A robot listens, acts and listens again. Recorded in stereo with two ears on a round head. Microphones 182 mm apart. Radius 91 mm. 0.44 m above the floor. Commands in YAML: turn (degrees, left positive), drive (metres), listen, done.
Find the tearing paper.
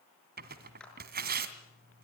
turn: -50
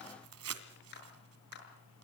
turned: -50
turn: -85
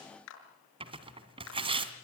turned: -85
turn: -25
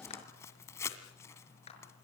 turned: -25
turn: 15
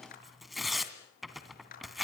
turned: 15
done: "Facing the tearing paper."